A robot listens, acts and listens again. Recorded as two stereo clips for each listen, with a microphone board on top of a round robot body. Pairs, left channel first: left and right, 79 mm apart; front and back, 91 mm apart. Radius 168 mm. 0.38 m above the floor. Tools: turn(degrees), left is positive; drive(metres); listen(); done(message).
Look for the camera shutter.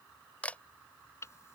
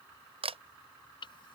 turn(degrees=165)
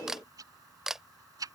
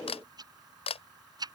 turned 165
done("Facing the camera shutter.")